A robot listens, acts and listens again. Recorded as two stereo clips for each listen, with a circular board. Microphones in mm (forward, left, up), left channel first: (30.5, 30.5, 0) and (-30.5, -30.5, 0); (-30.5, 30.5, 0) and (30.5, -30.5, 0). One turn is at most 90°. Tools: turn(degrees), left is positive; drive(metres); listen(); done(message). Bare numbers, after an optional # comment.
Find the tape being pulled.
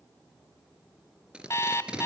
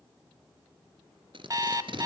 # The tape being pulled: 55° right.
turn(-55)
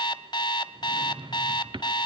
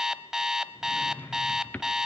listen()
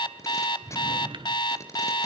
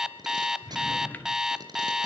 # The tape being pulled is now 10° right.
turn(-10)
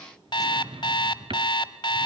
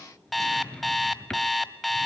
listen()
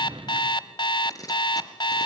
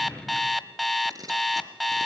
done("Found it: tape being pulled, straight ahead, 2 to 4 m away.")